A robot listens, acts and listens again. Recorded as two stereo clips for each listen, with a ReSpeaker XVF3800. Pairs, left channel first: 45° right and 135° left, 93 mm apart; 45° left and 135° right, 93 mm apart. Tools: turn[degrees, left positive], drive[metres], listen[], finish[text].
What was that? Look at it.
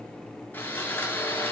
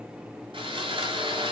Thought: The sawing: 115° right.
Action: turn[-115]
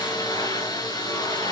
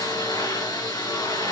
Action: finish[Found it: sawing, straight ahead.]